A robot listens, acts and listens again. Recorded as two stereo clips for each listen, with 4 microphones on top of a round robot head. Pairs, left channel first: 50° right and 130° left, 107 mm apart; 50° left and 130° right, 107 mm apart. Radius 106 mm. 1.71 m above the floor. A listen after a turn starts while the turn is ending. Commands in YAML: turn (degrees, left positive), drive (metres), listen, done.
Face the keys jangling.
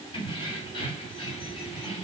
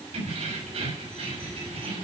turn: -95
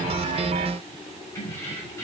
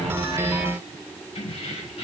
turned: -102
turn: 15
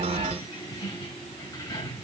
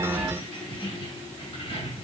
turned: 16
turn: 10
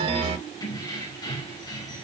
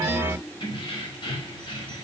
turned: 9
done: "Facing the keys jangling."